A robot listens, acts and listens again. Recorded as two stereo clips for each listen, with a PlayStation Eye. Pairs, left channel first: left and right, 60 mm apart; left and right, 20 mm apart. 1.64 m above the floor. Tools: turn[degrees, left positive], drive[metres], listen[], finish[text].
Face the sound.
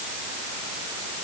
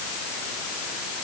Action: listen[]
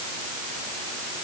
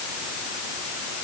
Action: listen[]
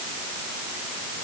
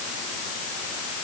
Action: finish[I can't make out anything to turn to.]